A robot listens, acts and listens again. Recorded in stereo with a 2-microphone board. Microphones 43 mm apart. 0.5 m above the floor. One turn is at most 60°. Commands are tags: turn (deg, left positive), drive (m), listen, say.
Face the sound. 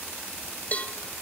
<turn deg="35"/>
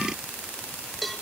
<say>Facing the cowbell, 1 to 2 m away.</say>